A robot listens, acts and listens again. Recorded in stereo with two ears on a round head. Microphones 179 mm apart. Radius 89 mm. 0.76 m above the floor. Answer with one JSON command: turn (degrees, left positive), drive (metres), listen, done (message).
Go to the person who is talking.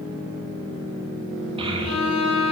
{"turn": -30}
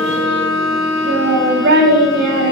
{"turn": -120}
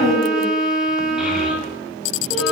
{"drive": 1.0}
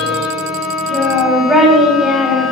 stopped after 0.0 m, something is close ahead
{"done": "Something is in my way. I am facing the child speaking but have not reached it."}